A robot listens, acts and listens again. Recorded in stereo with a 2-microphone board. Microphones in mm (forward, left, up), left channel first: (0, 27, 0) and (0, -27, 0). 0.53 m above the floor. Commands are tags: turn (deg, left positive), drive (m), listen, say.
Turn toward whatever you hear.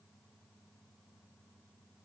<listen/>
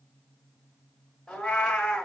<turn deg="15"/>
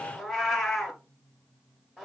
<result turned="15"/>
<say>Found it: a cat meowing, straight ahead, 1 to 2 m away.</say>